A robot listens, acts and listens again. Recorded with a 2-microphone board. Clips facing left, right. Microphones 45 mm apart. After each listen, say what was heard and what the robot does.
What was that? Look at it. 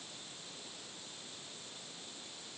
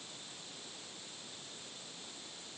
Keep listening.
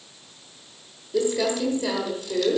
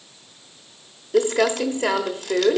The crumpling: about 65° right or 115° right. Turn 65° right.
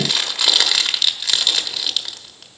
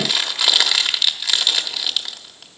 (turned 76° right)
Facing the crumpling, 1 to 2 m away.